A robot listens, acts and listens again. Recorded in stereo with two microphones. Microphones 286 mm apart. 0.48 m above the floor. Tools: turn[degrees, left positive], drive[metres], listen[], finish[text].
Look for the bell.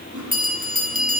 Thought: The bell: about 30° right or 150° right.
Action: turn[-30]
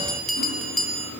Action: finish[Found it: a bell, straight ahead.]